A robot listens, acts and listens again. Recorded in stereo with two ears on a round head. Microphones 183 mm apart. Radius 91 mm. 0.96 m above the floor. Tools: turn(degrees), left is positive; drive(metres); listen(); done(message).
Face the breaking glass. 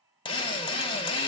listen()
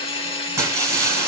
turn(degrees=-15)
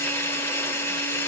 listen()
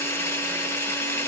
done("I heard breaking glass, but can't make it out now. It was about straight ahead or 150° right.")